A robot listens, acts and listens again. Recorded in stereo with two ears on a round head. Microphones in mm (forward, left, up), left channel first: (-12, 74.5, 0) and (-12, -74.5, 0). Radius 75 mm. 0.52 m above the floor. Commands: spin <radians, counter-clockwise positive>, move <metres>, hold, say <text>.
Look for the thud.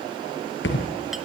spin 1.31
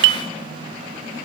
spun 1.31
hold
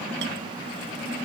say I heard a thud, but can't make it out now. It was about straight ahead or 30° left.